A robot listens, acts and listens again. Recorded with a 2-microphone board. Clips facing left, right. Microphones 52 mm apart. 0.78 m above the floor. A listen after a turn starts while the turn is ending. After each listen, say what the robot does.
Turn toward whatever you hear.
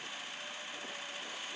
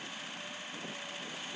Keep listening.
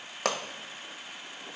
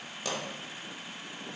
Turn 65° left.
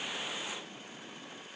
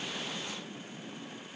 Keep listening.
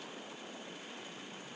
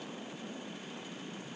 I heard a pop, but can't make it out now. It was about straight ahead or 50° left.